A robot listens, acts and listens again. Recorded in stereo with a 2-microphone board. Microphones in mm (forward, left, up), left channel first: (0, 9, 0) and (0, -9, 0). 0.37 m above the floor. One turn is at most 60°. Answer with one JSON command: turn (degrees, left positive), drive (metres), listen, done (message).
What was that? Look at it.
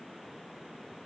{"listen": true}
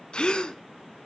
{"turn": 60}
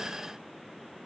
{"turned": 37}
{"listen": true}
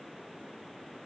{"done": "I heard a gasp, but can't make it out now. It was about 25° left or 80° left."}